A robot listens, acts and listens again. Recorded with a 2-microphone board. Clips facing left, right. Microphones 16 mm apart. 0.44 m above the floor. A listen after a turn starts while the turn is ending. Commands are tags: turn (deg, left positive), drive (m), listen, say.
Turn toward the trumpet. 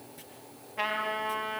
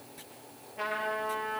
<turn deg="35"/>
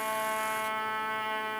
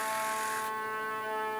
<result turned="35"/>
<turn deg="115"/>
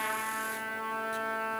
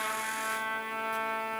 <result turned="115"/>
<turn deg="-25"/>
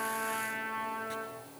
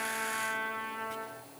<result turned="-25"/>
<say>Found it: a trumpet, straight ahead.</say>